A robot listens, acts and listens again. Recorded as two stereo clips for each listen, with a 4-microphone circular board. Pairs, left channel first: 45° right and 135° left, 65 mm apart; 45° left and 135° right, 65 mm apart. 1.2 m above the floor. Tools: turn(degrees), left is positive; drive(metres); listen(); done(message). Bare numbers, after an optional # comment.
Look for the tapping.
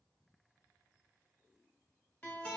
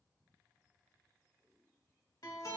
listen()
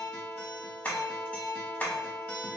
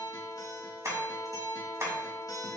# The tapping: 100° right.
turn(-100)
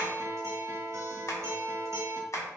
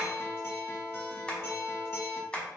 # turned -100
# The tapping is now 25° right.
turn(-25)
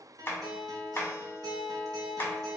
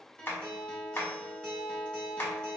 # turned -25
done("Found it: tapping, straight ahead.")